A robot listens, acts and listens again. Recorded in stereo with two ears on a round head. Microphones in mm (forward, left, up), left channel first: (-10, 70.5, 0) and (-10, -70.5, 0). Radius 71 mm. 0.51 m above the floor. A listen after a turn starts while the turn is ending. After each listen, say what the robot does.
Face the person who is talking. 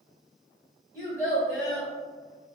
Turn 30° left.
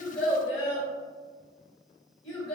Turn 150° left.
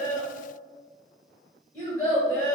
Turn 25° left.
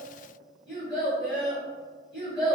Turn 10° left.
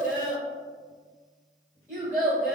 Found it: a child speaking, straight ahead.